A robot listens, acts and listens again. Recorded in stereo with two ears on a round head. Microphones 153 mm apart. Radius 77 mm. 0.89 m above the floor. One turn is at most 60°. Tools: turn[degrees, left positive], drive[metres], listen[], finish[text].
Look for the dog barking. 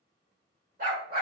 Thought: The dog barking: about 50° right or 130° right.
Action: turn[-50]
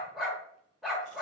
Action: finish[Facing the dog barking.]